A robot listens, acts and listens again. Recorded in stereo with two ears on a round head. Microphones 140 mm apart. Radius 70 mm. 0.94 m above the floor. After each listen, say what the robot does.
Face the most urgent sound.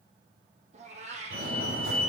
Turn 75° right.
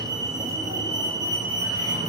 Turn 25° right.
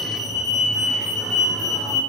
Facing the fire alarm, over 4 m away.